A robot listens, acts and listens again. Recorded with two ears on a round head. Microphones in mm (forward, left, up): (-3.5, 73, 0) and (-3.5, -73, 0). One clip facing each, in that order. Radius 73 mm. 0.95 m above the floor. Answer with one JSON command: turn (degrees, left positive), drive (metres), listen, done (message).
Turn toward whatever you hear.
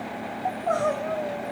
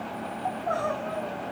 {"turn": 35}
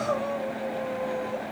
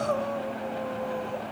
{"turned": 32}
{"done": "Found it: crying, straight ahead, 1 to 2 m away."}